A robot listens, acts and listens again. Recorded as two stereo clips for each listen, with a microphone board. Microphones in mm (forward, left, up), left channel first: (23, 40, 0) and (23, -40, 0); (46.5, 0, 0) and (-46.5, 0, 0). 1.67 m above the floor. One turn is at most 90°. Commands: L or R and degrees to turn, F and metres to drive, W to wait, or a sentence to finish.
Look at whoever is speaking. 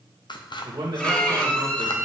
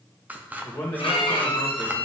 R55
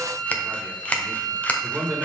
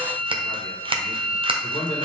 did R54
Found it: a man speaking, straight ahead.